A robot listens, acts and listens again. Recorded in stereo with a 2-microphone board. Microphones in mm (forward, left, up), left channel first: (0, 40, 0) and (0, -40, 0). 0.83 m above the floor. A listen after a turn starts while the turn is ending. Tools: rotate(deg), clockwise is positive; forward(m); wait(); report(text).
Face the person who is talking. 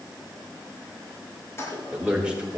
rotate(30)
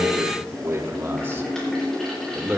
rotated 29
rotate(15)
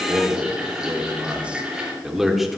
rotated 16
rotate(-30)
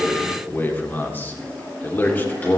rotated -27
rotate(-155)
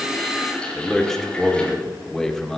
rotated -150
report("Found it: a man speaking, straight ahead, 2 to 4 m away.")